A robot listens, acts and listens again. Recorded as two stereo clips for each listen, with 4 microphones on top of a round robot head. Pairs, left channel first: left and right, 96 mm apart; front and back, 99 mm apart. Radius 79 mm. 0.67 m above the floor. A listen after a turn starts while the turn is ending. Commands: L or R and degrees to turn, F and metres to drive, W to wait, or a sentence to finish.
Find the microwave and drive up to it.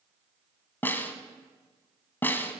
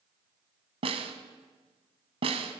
W
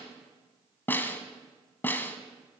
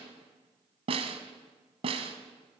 W
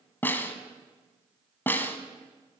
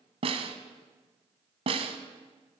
I can't make out a microwave to turn to.